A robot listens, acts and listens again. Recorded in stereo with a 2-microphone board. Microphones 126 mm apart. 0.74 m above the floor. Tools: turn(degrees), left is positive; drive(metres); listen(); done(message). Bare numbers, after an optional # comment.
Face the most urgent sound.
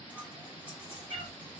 listen()
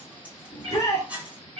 # The shout: about 25° left or 155° left.
turn(25)
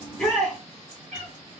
done("Facing the shout.")